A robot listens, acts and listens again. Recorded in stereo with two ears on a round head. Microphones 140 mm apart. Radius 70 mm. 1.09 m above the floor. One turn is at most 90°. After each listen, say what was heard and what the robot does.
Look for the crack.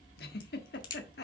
The crack: about 30° left or 150° left. Turn 30° left.
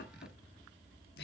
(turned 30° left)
Keep listening.
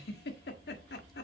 I heard a crack, but can't make it out now. It was about straight ahead or 120° left.